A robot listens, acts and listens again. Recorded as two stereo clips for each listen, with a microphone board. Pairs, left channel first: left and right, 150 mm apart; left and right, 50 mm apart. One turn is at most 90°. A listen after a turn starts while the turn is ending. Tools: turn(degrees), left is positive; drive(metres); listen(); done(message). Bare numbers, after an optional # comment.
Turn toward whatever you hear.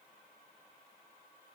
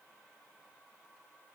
listen()
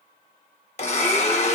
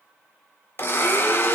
# The blender: about 45° left or 135° left.
turn(45)
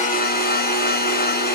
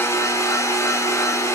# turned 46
# So it is at 90° left.
turn(90)
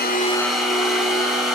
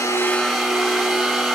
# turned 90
done("Found it: a blender, straight ahead, under 1 m away.")